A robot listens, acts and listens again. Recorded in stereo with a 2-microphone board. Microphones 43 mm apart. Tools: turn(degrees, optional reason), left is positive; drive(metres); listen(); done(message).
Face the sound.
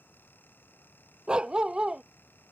turn(degrees=-20, reason="The dog barking: about 20° right or 160° right.")
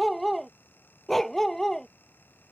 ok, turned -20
turn(degrees=10, reason="So it is at 10° left.")
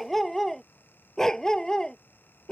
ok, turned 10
turn(degrees=20, reason="The dog barking is now 20° left.")
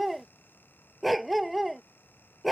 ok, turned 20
done("Found it: a dog barking, straight ahead.")